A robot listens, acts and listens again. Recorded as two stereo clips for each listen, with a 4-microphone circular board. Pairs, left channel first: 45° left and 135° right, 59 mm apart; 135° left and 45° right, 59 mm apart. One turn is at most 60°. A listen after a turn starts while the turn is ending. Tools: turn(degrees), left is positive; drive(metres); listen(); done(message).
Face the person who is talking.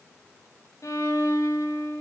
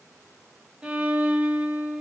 listen()
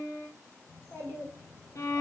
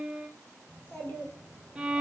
turn(degrees=60)
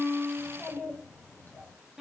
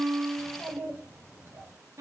done("Facing the child speaking, 2 to 4 m away.")